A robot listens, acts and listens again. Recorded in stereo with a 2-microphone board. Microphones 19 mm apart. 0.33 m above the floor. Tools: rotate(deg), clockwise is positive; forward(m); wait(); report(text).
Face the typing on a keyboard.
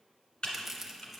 rotate(-70)
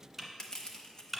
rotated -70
report("Found it: typing on a keyboard, straight ahead.")